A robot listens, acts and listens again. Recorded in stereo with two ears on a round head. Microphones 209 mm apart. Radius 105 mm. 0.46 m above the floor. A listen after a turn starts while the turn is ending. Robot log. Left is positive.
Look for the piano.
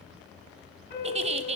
note: The piano: about 40° left or 140° left.
cmd yaw +40
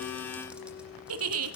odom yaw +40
note: So it is at 100° left.
cmd yaw +100
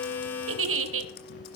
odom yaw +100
note: The piano is now 50° left.
cmd yaw +50
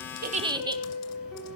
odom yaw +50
end: Found it: a piano, straight ahead.